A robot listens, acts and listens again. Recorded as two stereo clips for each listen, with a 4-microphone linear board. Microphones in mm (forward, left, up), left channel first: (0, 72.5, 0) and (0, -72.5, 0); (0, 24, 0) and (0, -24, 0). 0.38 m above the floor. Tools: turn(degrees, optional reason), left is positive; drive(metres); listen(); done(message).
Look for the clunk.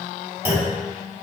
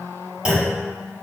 turn(degrees=-15, reason="The clunk: about 15° right or 165° right.")
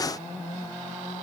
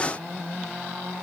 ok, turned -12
listen()
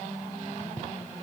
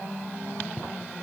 done("I heard a clunk, but can't make it out now. It was about 5° right or 150° right.")